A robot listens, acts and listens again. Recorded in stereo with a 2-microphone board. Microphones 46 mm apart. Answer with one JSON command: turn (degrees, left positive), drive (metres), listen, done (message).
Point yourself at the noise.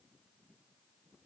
{"listen": true}
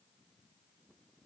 {"listen": true}
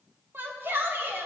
{"turn": -45}
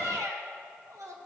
{"turn": -90}
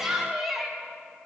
{"done": "Facing the shout, 1 to 2 m away."}